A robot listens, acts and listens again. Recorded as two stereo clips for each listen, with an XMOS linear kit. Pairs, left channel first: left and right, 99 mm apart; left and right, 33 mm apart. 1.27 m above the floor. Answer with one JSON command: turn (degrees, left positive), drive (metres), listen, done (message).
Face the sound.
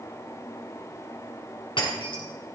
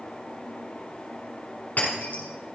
{"turn": 55}
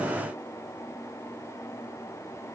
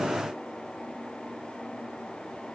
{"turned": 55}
{"listen": true}
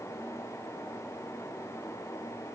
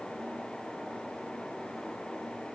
{"done": "I heard breaking glass, but can't make it out now. It was about straight ahead or 70° left."}